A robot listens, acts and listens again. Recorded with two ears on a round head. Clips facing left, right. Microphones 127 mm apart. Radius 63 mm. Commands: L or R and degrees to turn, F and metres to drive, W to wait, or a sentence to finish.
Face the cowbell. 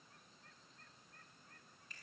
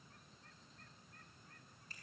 W
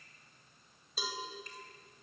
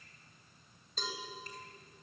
L30
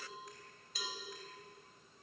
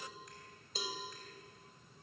R25
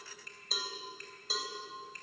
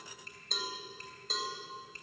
Facing the cowbell, 2 to 4 m away.